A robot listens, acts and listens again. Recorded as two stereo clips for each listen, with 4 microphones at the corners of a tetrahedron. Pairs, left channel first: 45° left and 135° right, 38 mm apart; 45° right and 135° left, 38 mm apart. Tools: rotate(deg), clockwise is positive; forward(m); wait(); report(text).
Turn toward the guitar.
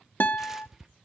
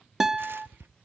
rotate(-60)
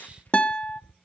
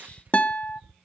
report("Facing the guitar, under 1 m away.")